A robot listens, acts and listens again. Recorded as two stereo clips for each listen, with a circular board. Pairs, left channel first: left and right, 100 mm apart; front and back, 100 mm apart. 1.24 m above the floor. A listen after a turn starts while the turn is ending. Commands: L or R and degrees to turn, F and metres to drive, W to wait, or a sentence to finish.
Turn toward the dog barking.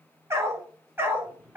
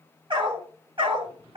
R160
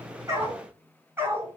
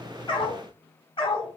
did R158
R25
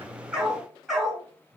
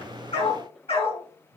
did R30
Facing the dog barking.